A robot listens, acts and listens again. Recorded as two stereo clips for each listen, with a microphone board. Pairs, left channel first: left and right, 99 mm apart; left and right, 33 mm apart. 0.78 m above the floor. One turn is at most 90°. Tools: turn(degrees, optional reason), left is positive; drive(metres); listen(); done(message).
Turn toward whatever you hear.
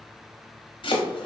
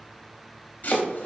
turn(degrees=60, reason="The chopping: about 60° left or 120° left.")
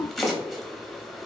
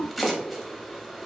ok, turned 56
done("Facing the chopping.")